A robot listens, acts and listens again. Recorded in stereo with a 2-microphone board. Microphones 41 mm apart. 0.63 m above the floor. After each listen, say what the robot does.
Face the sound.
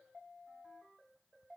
Keep listening.
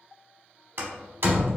Turn 55° right.
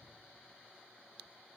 Keep listening.
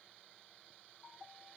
I heard a door slam, but can't make it out now. It was about straight ahead or 70° right.